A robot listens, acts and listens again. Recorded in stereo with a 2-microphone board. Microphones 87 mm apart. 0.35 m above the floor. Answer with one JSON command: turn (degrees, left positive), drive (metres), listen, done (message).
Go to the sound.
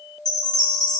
{"turn": 55}
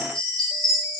{"turn": 10}
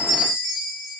{"drive": 1.0}
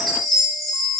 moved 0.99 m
{"drive": 1.0}
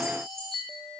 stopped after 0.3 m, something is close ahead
{"done": "I am next to the chime."}